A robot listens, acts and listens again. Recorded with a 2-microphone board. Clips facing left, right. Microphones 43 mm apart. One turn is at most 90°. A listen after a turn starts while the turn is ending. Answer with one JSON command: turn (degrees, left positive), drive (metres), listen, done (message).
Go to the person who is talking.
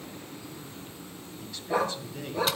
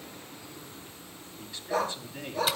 {"turn": -25}
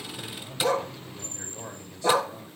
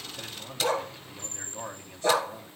{"turn": -90}
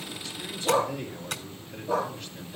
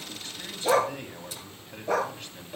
{"turn": -45}
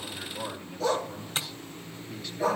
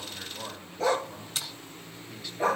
{"drive": 1.0}
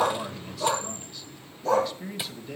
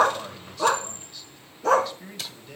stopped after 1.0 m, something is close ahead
{"done": "Arrived at the man speaking, straight ahead."}